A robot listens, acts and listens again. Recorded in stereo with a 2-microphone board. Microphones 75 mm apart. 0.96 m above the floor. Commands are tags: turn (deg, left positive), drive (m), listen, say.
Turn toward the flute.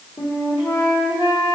<turn deg="90"/>
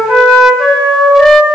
<say>Facing the flute, 1 to 2 m away.</say>